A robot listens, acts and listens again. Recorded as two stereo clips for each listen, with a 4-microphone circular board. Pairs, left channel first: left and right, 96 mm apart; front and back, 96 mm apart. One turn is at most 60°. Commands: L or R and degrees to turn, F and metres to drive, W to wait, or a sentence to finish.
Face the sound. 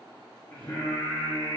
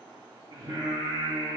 L60
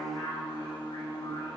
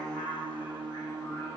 L60
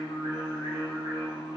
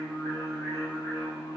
L60
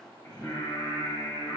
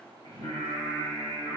L40
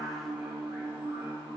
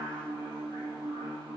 R20
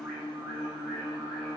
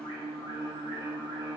Facing the singing.